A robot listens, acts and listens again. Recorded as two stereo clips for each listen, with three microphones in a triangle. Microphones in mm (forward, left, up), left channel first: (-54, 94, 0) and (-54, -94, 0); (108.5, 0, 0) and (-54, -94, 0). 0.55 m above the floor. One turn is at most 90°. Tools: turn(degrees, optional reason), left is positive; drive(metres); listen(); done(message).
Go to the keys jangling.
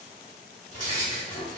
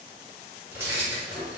turn(degrees=90, reason="The keys jangling: 135° left.")
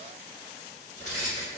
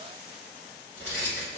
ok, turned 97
turn(degrees=40, reason="The keys jangling is now 40° left.")
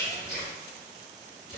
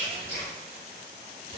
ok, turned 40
drive(metres=1.0)
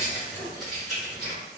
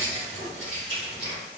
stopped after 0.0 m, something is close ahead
done("Blocked. The keys jangling is further on, straight ahead.")